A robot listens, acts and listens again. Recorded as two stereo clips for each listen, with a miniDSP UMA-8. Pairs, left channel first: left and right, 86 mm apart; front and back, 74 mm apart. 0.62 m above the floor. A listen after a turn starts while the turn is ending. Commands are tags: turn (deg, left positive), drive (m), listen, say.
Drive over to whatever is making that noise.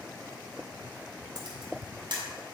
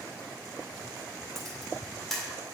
<turn deg="-90"/>
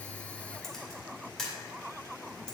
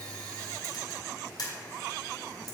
<drive m="1.0"/>
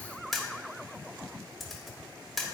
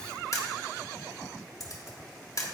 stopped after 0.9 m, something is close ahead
<say>Arrived at the camera shutter, straight ahead.</say>